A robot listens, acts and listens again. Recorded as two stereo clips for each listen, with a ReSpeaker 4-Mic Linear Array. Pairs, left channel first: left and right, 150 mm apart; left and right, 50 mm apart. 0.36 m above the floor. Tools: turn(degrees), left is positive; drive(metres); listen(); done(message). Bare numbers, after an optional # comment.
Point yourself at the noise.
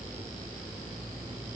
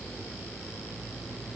listen()
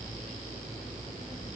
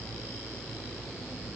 listen()
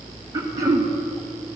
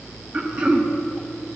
# The throat clearing: about 20° right or 160° right.
turn(-20)
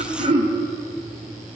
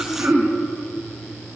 # So it is at 135° right.
turn(-135)
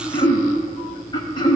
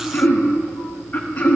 # The throat clearing is now 35° left.
turn(35)
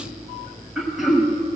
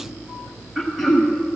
done("Facing the throat clearing.")